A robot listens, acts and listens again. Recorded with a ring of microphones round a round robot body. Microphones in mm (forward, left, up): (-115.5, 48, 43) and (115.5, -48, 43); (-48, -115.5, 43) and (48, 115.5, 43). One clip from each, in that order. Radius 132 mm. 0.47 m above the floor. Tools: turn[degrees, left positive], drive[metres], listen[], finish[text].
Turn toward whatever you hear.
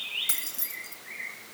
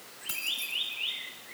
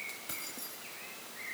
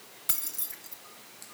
Thought: The keys jangling: 95° left.
Action: turn[95]
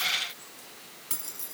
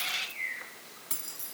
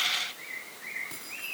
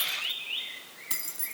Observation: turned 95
Thought: The keys jangling is now 70° left.
Action: turn[70]
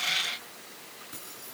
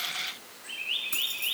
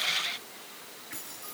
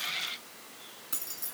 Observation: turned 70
Thought: The keys jangling is now 20° left.
Action: turn[20]
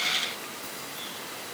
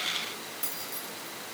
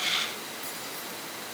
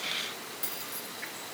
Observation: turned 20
Thought: The keys jangling is now 15° left.
Action: turn[15]
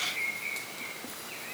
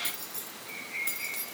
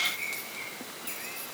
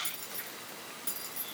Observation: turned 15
Action: finish[Found it: keys jangling, straight ahead, over 4 m away.]